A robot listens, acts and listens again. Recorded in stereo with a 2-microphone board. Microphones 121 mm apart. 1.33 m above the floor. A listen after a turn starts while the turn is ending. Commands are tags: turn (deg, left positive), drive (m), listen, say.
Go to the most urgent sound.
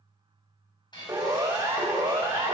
<turn deg="-20"/>
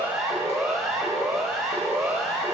<drive m="1.0"/>
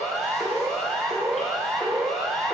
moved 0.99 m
<drive m="1.0"/>
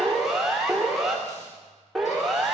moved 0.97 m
<drive m="1.0"/>
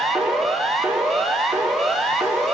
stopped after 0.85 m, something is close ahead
<say>I am next to the siren.</say>